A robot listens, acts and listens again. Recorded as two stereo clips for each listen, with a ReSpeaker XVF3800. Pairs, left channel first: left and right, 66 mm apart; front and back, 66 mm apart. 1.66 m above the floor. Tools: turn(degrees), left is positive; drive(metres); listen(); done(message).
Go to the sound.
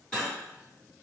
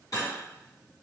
turn(degrees=15)
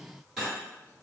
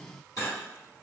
drive(metres=1.0)
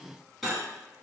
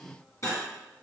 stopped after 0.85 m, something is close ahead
done("I am next to the cutlery clinking.")